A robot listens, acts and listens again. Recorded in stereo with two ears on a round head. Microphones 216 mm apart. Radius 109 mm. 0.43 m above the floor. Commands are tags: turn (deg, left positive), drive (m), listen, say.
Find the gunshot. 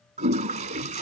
<listen/>
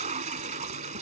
<listen/>
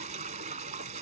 <say>I can't make out a gunshot, only a toilet flushing.</say>